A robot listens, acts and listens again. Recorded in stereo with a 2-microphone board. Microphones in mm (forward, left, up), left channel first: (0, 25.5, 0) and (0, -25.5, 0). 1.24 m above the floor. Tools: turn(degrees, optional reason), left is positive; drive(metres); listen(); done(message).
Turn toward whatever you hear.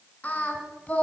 turn(degrees=25, reason="The singing: about 25° left or 155° left.")
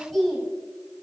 done("Facing the singing, 2 to 4 m away.")